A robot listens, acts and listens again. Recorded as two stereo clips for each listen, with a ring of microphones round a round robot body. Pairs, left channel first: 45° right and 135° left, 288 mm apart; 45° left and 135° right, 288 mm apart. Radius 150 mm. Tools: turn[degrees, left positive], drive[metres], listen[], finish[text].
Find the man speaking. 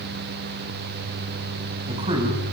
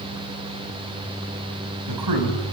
Thought: The man speaking: 150° right.
Action: turn[-150]
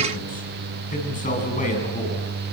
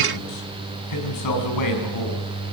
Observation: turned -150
Thought: The man speaking is now 20° left.
Action: turn[20]
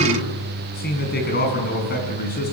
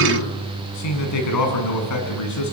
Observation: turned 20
Thought: The man speaking is now 15° left.
Action: turn[15]
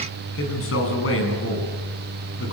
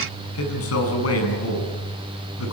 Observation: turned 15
Action: finish[Facing the man speaking.]